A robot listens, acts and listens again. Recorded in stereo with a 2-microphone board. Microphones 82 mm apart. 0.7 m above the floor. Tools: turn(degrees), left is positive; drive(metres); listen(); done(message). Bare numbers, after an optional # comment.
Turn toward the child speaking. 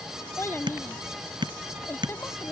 # The child speaking: about 30° left or 150° left.
turn(30)
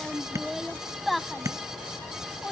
done("Facing the child speaking.")